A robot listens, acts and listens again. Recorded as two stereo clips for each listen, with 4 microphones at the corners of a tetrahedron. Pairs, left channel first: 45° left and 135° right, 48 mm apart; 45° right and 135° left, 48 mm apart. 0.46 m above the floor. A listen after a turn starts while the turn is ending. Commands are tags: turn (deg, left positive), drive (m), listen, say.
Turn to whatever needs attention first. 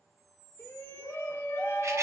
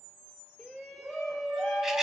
<turn deg="45"/>
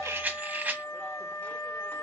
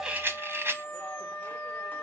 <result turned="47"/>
<listen/>
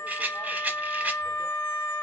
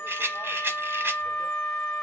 <listen/>
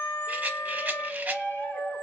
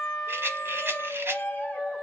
<say>Found it: a shout, straight ahead, 1 to 2 m away.</say>